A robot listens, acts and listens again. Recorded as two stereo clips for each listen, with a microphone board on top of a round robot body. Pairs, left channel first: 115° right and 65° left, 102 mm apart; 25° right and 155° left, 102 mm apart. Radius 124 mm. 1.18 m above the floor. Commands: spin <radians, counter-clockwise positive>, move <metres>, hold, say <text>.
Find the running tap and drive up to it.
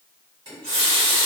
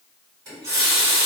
spin 1.92
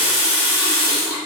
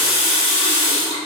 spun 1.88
move 1.0
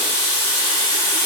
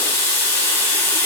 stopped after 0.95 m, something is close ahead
spin 0.17
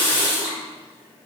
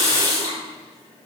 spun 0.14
say Arrived at the running tap, straight ahead.